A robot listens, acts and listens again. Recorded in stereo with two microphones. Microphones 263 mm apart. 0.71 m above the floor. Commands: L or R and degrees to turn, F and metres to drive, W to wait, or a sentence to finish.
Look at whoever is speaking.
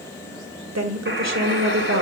R90
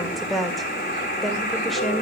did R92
Facing the woman speaking, 2 to 4 m away.